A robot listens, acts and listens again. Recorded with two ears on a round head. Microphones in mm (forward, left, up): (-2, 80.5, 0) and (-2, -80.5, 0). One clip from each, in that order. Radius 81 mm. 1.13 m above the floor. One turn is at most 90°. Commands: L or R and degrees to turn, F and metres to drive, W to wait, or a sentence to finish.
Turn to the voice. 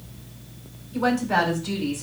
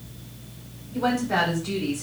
L30
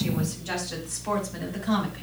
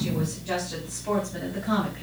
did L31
L90
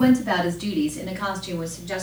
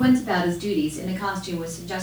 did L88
L65
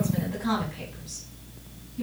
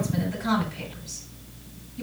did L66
Found it: a woman speaking, straight ahead.